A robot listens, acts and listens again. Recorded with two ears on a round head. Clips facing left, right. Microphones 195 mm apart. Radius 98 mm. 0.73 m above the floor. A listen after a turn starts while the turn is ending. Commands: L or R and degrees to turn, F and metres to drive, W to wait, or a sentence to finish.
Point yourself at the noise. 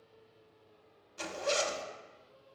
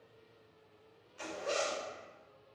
L55
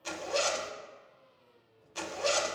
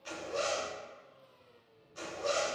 L70
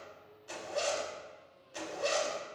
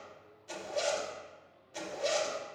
Facing the zipper.